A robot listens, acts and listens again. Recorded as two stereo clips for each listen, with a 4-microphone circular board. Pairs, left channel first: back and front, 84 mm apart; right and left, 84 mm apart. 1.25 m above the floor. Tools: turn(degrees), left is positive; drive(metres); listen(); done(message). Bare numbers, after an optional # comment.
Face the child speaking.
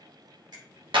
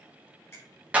listen()
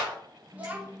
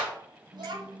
# The child speaking: 70° left.
turn(70)
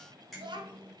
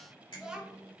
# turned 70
# The child speaking is now 10° left.
turn(10)
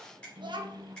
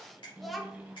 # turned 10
done("Facing the child speaking, under 1 m away.")